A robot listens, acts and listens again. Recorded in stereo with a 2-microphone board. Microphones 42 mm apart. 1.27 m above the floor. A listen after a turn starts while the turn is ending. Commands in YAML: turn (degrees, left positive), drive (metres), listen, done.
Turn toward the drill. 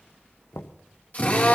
turn: 40
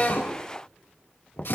turn: 100
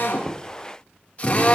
turn: 35
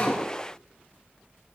listen: true
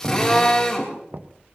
turn: 15
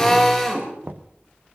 done: "Found it: a drill, straight ahead."